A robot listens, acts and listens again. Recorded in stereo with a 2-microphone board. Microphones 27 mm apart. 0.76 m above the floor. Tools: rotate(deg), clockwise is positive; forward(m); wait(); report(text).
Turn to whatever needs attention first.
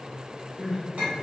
rotate(30)
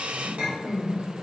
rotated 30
rotate(120)
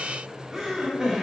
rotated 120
rotate(20)
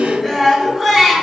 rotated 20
report("Facing the crying.")